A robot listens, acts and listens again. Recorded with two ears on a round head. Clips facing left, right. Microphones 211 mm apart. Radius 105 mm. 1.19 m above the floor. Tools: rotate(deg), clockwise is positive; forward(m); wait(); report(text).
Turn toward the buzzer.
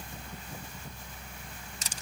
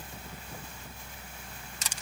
wait()
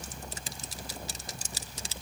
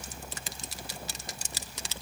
wait()
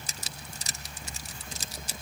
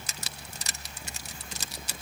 report("I can't make out a buzzer, only crushing.")